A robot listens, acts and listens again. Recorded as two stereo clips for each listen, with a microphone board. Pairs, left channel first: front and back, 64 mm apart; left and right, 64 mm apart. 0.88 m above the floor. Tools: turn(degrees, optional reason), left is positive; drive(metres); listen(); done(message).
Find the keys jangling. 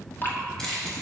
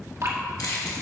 turn(degrees=80, reason="The keys jangling: 80° left.")
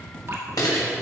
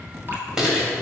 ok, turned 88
turn(degrees=-10, reason="The keys jangling is now 10° right.")
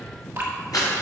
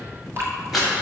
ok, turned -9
done("Found it: keys jangling, straight ahead, 2 to 4 m away.")